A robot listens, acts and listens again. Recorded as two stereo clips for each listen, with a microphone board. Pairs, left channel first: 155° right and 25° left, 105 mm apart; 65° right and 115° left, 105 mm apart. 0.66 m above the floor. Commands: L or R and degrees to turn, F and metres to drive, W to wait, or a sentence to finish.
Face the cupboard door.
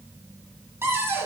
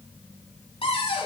R45
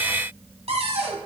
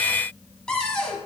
L15
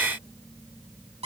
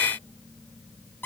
Found it: a cupboard door, straight ahead.